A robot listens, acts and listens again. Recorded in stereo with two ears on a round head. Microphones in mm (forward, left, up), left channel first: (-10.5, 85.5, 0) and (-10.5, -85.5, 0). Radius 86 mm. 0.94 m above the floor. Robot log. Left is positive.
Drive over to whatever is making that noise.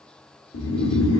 note: The snoring: about 70° left or 110° left.
cmd yaw +70
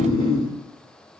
note: So it is at 25° left.
cmd yaw +25
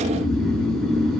cmd fwd 1.0
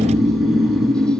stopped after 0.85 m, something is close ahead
end: Arrived at the snoring, straight ahead.